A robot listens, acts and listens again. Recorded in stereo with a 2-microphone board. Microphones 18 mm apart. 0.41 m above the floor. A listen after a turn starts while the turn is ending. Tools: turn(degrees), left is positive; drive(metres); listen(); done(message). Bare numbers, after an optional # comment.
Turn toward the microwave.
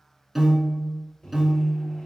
# The microwave: about 55° left or 125° left.
turn(55)
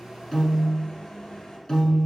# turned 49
# So it is at 60° left.
turn(60)
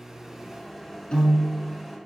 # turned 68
done("Found it: a microwave, straight ahead, 1 to 2 m away.")